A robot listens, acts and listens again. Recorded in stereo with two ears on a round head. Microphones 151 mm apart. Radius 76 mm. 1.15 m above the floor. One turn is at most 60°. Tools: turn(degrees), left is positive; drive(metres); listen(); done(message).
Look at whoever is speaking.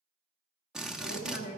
turn(degrees=60)
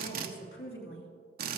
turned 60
turn(degrees=60)
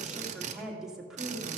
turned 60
done("Found it: a woman speaking, straight ahead.")